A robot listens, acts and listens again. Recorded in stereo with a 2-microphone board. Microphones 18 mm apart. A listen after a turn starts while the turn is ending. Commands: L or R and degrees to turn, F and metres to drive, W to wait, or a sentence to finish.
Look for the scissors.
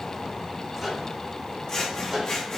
L30
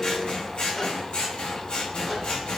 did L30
L125
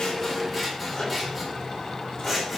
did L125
Found it: scissors, straight ahead.